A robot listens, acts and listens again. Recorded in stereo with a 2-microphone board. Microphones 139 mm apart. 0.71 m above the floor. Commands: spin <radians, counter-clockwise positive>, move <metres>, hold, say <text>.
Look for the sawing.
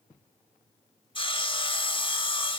spin 0.70
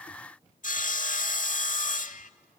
spin 1.75
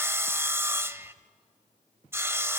spin -0.35
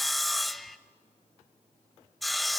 say Found it: sawing, straight ahead.